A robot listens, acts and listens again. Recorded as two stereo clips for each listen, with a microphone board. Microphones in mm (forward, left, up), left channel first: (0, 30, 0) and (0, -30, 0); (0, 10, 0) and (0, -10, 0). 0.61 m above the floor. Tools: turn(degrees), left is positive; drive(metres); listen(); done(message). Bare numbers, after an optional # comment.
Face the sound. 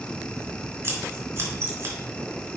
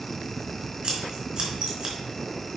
# The scissors: about 45° right or 135° right.
turn(-45)
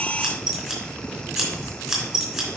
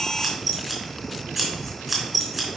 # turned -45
done("Facing the scissors, 2 to 4 m away.")